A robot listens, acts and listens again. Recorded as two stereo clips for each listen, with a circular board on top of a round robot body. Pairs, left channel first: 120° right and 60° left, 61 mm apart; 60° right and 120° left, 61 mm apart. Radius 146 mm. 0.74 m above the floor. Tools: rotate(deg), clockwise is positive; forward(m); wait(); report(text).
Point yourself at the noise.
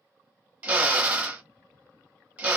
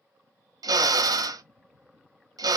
rotate(-130)
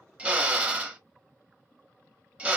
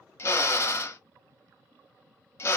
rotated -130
rotate(10)
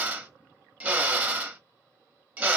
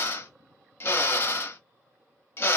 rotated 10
report("Facing the drill, under 1 m away.")